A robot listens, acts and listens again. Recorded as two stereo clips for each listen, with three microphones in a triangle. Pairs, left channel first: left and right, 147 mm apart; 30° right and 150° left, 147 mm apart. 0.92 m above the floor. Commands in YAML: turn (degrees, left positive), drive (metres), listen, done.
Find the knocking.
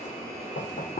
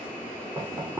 turn: 80
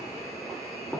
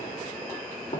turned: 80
done: "Found it: knocking, straight ahead."